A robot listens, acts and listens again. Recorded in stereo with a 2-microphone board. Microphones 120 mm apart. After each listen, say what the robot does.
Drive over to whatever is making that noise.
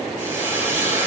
Turn 25° right.
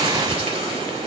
Turn 130° right.
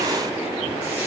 Keep listening.
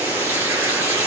Turn 15° right.
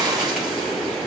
Keep listening.
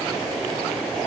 Keep listening.
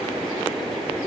I heard frying from this way, but can't make it out now. I did not reach it.